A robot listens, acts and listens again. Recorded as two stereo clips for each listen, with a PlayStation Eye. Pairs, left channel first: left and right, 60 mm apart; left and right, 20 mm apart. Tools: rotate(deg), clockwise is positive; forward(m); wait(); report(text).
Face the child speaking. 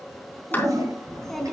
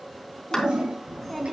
rotate(-30)
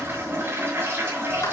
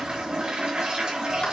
wait()
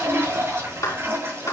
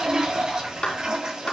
wait()
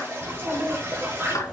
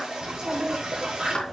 rotate(25)
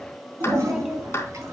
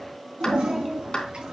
rotate(10)
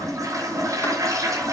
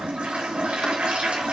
wait()
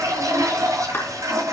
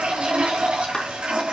wait()
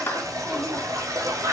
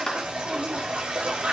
report("I heard a child speaking from this way, but can't make it out now.")